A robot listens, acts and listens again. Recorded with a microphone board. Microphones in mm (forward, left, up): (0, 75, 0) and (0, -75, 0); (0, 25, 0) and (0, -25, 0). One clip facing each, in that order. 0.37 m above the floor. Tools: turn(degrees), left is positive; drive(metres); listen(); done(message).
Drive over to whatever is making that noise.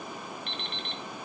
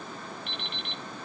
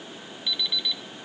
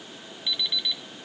turn(degrees=-30)
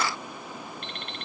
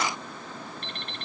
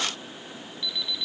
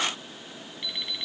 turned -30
turn(degrees=-145)
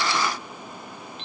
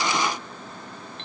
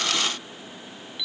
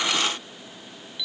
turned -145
turn(degrees=20)
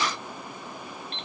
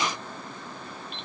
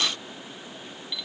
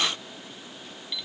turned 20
drive(metres=1.0)
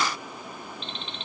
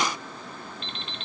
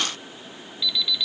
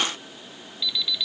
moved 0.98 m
drive(metres=1.0)
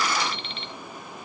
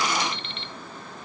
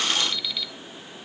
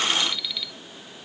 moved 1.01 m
drive(metres=1.0)
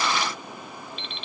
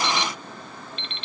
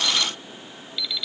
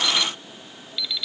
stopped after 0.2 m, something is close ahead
done("I am next to the alarm clock.")